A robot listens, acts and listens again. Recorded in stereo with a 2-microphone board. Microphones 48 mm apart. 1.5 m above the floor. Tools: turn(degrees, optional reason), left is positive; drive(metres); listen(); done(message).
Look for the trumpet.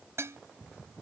listen()
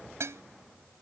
listen()
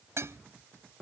done("I can't make out a trumpet, only dishes clattering.")